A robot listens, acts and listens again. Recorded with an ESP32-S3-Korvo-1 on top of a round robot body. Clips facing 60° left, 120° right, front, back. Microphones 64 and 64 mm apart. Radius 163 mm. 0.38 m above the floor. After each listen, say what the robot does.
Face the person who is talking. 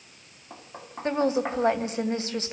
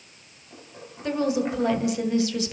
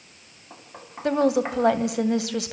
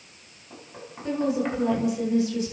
Facing the woman speaking, 2 to 4 m away.